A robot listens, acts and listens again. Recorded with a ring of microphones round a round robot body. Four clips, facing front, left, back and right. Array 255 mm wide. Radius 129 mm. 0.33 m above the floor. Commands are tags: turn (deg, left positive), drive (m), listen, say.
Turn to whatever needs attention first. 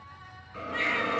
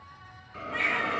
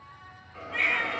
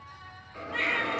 <turn deg="100"/>
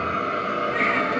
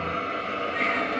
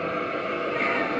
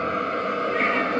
<turn deg="20"/>
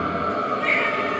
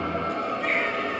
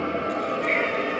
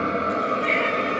<say>Facing the baby crying.</say>